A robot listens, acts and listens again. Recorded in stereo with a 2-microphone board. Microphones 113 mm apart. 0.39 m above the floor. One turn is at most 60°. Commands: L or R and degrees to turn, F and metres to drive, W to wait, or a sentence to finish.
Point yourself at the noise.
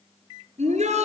R60
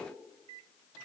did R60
R30
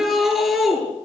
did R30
Facing the shout, over 4 m away.